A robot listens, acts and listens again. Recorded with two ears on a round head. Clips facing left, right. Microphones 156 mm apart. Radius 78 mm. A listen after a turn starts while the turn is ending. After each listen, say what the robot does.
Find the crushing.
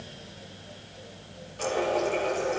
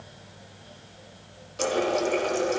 Keep listening.
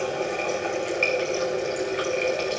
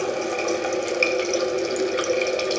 Keep listening.
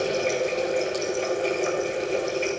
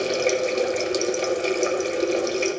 I can't make out crushing to turn to.